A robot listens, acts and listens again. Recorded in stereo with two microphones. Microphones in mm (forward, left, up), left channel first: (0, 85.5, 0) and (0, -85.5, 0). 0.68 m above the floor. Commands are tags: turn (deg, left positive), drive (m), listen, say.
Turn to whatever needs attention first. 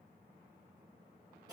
<listen/>
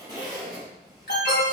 <turn deg="75"/>
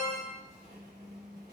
<turn deg="10"/>
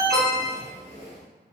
<say>Facing the alarm, under 1 m away.</say>